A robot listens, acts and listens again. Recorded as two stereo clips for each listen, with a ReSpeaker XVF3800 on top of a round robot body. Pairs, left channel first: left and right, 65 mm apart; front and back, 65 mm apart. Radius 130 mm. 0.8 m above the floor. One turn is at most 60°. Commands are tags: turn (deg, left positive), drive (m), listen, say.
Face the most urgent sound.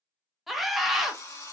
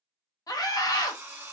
<say>Found it: a scream, straight ahead.</say>